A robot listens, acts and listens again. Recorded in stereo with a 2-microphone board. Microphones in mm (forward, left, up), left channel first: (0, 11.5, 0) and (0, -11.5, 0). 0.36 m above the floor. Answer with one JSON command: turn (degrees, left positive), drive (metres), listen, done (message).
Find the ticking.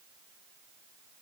{"listen": true}
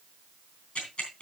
{"turn": 65}
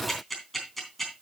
{"turn": 10}
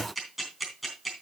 {"done": "Found it: ticking, straight ahead, 2 to 4 m away."}